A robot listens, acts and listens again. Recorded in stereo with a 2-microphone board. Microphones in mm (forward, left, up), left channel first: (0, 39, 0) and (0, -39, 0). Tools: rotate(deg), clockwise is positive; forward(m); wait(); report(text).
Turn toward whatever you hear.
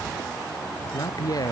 rotate(-55)
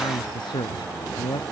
rotate(-75)
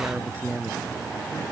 rotate(25)
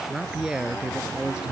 rotate(10)
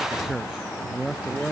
report("Facing the man speaking.")